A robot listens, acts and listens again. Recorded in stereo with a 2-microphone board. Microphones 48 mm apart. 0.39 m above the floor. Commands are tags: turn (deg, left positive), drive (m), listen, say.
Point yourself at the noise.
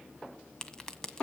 <turn deg="30"/>
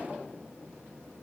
<listen/>
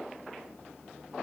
<say>I heard a crack, but can't make it out now. It was about 15° right or 135° left.</say>